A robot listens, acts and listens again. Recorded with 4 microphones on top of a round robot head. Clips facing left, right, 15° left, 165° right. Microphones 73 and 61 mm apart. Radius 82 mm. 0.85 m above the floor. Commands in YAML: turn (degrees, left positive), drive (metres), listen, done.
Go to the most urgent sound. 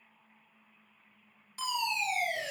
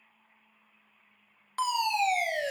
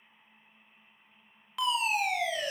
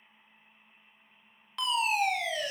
turn: -70
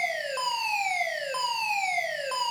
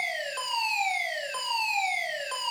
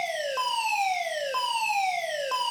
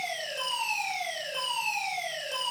turn: 15
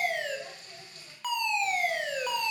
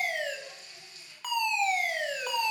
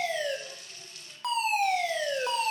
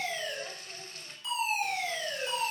drive: 1.0
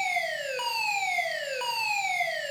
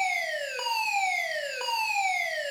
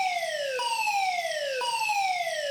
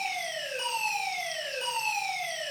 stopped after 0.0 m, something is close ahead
done: "Blocked. The fire alarm is further on, straight ahead."